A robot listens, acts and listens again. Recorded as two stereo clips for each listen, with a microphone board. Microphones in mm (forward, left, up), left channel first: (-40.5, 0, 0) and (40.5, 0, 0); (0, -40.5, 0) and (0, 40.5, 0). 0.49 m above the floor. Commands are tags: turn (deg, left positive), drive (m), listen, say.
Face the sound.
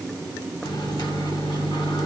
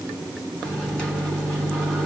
<turn deg="-165"/>
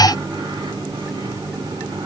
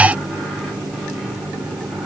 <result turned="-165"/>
<turn deg="10"/>
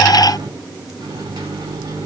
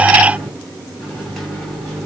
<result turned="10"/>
<say>Found it: a microwave, straight ahead.</say>